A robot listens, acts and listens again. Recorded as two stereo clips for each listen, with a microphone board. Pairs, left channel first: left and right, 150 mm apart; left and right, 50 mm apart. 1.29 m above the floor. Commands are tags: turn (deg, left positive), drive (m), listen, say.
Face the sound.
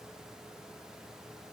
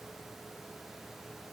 <listen/>
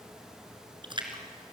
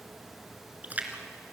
<turn deg="-35"/>
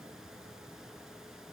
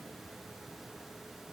<listen/>
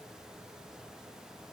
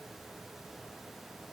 <say>I heard a splash, but can't make it out now. It was about straight ahead or 110° right.</say>